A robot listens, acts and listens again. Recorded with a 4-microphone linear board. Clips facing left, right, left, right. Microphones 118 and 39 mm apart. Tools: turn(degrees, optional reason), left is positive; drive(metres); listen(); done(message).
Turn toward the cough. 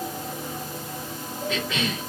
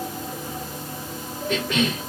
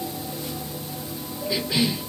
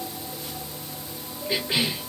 turn(degrees=-55, reason="The cough: about 55° right or 125° right.")
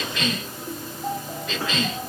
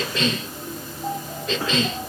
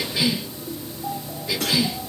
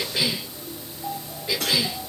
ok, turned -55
turn(degrees=-40, reason="So it is at 40° right.")
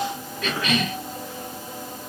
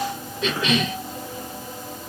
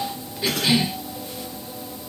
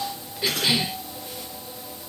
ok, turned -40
turn(degrees=-25, reason="The cough is now 25° right.")
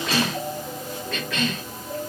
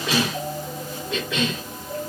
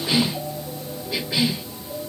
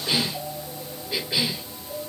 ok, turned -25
turn(degrees=-20, reason="The cough is now 20° right.")
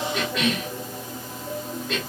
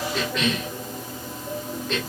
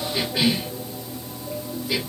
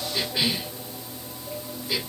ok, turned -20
done("Facing the cough, 1 to 2 m away.")